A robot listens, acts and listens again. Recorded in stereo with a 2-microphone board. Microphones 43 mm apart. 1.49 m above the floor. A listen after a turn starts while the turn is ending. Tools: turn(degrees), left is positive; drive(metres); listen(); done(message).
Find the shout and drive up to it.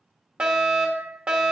listen()
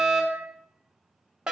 listen()
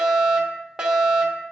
done("I can't make out a shout, only a fire alarm.")